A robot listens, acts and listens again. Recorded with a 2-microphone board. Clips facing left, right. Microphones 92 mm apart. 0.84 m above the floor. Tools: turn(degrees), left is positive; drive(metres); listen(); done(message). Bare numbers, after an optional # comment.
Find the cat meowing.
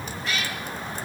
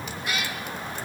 turn(-30)
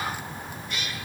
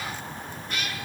# So it is at 135° right.
turn(-135)
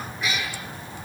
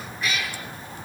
done("Found it: a cat meowing, straight ahead, over 4 m away.")